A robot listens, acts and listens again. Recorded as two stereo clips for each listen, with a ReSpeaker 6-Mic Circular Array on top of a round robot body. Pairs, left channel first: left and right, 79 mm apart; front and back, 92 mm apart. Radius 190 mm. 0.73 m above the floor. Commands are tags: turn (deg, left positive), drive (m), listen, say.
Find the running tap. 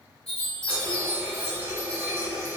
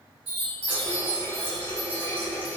<turn deg="-25"/>
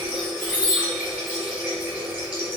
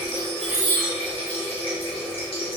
<turn deg="-15"/>
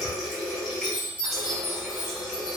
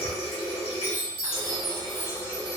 <say>Found it: a running tap, straight ahead, 1 to 2 m away.</say>